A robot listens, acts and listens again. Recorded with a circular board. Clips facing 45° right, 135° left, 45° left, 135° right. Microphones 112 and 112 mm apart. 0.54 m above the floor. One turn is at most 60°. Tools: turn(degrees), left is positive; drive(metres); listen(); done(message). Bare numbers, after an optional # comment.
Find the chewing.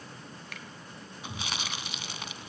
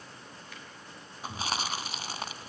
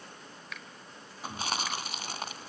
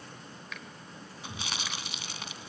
# The chewing: 85° left.
turn(60)
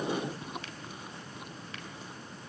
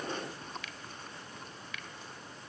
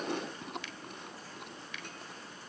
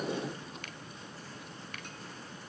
# The chewing is now 35° left.
turn(35)
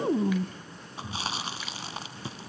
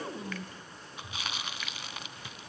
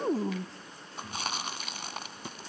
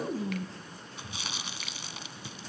# The chewing is now 10° left.
turn(10)
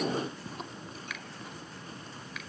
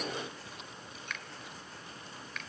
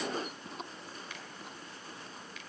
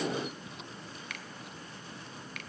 done("Facing the chewing.")